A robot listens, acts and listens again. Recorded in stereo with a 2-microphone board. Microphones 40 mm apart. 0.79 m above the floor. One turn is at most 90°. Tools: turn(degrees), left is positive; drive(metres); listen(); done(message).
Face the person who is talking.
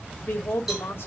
turn(degrees=65)
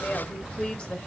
turn(degrees=35)
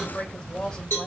turn(degrees=30)
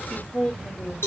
turn(degrees=20)
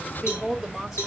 done("Facing the woman speaking, 1 to 2 m away.")